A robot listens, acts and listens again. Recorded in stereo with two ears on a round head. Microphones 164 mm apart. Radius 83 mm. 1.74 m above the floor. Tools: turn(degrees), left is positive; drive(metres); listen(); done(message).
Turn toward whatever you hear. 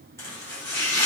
turn(degrees=30)
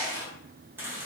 turn(degrees=-15)
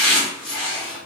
done("Found it: chopping, straight ahead, 1 to 2 m away.")